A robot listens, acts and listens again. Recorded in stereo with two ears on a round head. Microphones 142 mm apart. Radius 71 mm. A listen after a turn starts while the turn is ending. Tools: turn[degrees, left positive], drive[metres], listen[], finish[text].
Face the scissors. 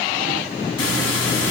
Action: listen[]
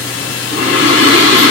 Action: listen[]
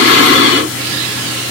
Action: finish[I can't make out scissors to turn to.]